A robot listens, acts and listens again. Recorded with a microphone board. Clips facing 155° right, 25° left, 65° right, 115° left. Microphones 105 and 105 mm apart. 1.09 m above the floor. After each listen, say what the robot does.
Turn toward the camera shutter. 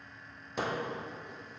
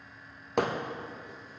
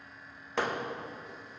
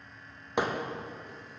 Keep listening.
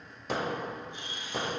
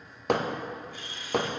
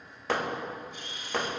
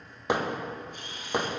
Turn 140° left.
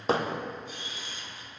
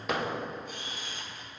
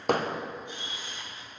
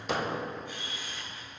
Found it: a camera shutter, straight ahead, 1 to 2 m away.